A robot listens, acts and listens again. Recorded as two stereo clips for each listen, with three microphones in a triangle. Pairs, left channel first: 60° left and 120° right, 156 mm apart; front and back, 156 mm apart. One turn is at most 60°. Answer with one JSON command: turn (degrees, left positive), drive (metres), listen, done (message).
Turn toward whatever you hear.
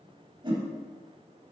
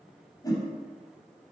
{"turn": -60}
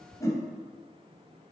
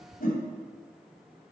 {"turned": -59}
{"done": "Facing the whoosh."}